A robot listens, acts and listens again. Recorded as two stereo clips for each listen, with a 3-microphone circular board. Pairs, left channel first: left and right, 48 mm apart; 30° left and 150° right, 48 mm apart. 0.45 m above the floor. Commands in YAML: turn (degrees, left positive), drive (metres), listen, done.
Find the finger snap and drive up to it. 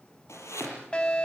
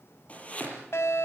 listen: true
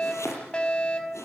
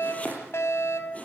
listen: true
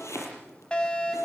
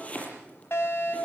done: "I can't make out a finger snap to turn to."